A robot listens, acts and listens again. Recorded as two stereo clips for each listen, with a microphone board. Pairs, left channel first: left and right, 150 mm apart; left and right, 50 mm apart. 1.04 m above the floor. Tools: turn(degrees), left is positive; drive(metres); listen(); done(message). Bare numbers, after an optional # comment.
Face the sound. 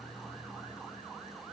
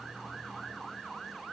listen()
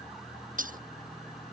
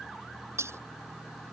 # The breaking glass: about 65° right or 115° right.
turn(-65)
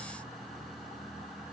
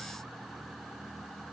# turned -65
listen()
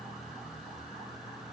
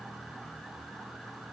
done("I heard breaking glass, but can't make it out now. It was about straight ahead or 50° right.")